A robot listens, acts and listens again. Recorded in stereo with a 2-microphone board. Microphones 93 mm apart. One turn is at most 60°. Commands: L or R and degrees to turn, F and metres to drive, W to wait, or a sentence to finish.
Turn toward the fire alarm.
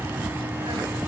W
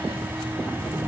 W
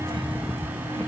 I can't make out a fire alarm to turn to.